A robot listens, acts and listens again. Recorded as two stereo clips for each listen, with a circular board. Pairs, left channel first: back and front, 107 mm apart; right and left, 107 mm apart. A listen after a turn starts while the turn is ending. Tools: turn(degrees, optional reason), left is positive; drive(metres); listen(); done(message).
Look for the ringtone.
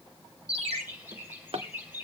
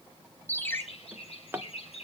turn(degrees=-20, reason="The ringtone: 20° right.")
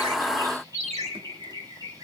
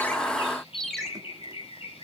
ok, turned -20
done("Found it: a ringtone, straight ahead, 2 to 4 m away.")